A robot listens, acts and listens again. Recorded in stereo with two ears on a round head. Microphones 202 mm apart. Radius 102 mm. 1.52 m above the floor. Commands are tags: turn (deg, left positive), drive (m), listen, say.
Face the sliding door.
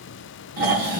<listen/>
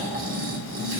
<listen/>
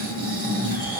<say>I can't make out a sliding door, only snoring.</say>